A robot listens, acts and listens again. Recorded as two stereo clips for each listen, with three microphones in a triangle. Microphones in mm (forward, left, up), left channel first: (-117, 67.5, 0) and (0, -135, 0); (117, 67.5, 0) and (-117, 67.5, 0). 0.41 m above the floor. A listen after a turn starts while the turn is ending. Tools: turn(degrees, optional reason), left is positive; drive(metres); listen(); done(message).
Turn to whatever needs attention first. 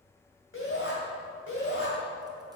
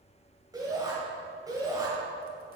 turn(degrees=110, reason="The shout: 110° left.")
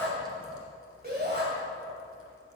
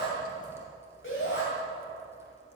turn(degrees=-20, reason="The shout is now 20° right.")
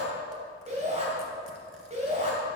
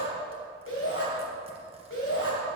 done("Facing the shout, 2 to 4 m away.")